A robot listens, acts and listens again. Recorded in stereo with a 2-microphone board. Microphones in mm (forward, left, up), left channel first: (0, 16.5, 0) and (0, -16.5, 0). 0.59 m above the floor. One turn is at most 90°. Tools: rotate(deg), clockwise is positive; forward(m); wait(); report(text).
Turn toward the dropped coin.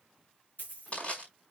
rotate(-90)
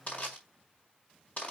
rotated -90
report("Facing where the dropped coin came from. I can't hear it now.")